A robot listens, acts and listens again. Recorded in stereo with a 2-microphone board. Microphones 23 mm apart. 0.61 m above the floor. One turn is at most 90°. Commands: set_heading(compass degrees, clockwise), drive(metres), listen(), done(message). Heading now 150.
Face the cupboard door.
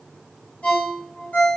listen()
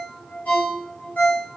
listen()
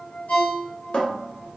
set_heading(90)
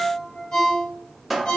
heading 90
done("Facing the cupboard door.")